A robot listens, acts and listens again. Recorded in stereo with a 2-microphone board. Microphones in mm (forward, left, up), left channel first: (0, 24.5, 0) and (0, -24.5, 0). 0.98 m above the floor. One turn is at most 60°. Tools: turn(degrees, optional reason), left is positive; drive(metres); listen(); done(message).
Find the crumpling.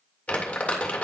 turn(degrees=30, reason="The crumpling: about 30° left or 150° left.")
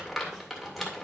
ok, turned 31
done("Facing the crumpling, 1 to 2 m away.")